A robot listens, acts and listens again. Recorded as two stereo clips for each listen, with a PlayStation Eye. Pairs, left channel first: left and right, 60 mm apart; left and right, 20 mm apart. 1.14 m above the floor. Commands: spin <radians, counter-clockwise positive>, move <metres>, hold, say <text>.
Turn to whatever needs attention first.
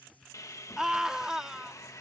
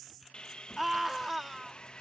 spin -0.52
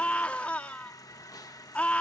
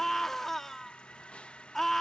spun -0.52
spin 0.35
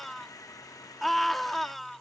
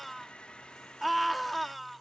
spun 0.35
say Facing the scream.